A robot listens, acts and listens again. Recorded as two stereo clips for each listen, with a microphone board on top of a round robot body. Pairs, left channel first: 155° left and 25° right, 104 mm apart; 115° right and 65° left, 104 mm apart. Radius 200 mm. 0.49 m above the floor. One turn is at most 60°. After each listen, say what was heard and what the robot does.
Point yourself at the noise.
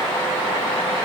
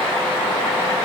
Keep listening.
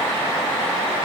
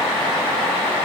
Keep listening.
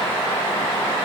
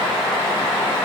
I can't make out anything.